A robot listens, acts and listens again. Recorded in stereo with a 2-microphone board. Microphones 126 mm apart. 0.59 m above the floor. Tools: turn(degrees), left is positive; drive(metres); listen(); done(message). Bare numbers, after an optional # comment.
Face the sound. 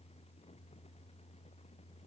listen()
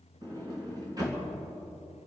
# The sliding door: about 30° right or 150° right.
turn(-30)
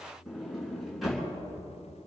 done("Facing the sliding door, 2 to 4 m away.")